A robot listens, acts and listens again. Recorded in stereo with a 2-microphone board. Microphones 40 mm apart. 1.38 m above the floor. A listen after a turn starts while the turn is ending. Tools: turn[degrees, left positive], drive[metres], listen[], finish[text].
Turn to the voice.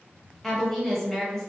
Action: turn[30]
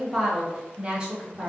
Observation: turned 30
Thought: So it is at 25° right.
Action: turn[-25]
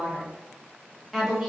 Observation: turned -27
Action: finish[Facing the woman speaking, under 1 m away.]